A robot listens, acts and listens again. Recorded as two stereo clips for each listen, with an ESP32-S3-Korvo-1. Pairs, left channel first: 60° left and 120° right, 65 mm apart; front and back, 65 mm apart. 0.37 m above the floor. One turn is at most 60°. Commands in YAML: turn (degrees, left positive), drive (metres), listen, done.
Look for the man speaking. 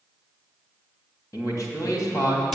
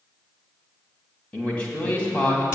turn: 60
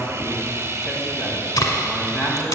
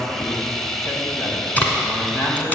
turn: 20
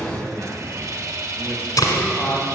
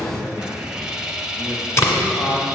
done: "Found it: a man speaking, straight ahead, 2 to 4 m away."